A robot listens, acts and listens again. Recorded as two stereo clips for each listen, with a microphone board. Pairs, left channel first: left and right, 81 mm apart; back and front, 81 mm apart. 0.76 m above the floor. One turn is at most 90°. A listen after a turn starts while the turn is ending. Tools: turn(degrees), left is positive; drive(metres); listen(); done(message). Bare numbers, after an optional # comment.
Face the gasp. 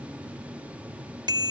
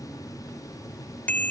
listen()
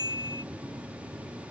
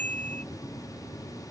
listen()
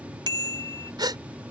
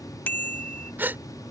# The gasp: 65° right.
turn(-65)
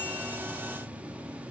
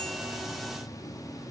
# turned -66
done("Facing where the gasp came from. I can't hear it now.")